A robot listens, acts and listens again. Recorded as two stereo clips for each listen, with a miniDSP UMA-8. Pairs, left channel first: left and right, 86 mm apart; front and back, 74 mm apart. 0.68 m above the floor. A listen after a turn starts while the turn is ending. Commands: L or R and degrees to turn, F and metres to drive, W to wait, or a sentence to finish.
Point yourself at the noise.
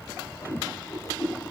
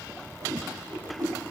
L140
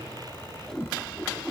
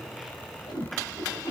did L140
Facing the whoosh, over 4 m away.